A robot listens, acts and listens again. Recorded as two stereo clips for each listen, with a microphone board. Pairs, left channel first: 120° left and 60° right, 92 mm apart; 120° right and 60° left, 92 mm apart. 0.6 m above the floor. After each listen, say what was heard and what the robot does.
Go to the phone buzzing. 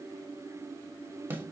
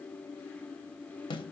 Keep listening.
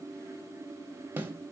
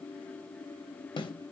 Keep listening.
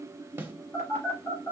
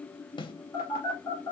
The phone buzzing: straight behind. Turn 180° left.
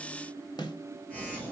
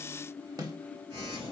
The phone buzzing is now 45° left. Turn 45° left.
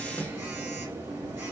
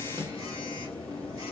The phone buzzing is now 10° left. Turn 10° left.
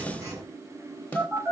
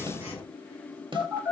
Drive 1.0 m forward.
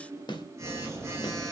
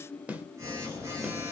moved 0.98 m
Drive 1.0 m forward.
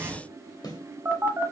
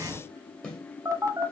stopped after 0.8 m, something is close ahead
Arrived at the phone buzzing, straight ahead.